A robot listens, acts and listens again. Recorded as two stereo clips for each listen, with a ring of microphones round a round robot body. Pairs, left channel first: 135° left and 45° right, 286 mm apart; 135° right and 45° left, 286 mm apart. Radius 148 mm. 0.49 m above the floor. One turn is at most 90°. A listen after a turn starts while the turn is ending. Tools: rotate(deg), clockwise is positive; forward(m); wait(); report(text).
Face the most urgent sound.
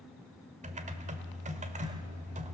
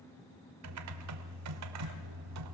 wait()
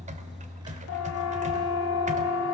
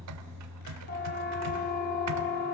rotate(-90)
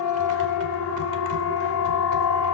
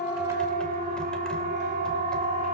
rotate(-90)
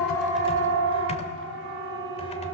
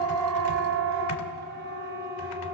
report("Facing the siren.")